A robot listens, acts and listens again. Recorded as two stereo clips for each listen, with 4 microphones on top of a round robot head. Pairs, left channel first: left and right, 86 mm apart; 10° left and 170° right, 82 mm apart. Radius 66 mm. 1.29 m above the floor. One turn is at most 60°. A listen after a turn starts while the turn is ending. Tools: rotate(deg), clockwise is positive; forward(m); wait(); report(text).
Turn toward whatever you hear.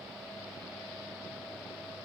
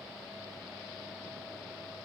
wait()
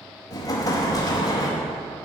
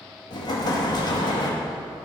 rotate(-45)
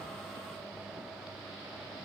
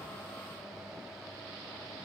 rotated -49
report("Facing where the explosion came from. I can't hear it now.")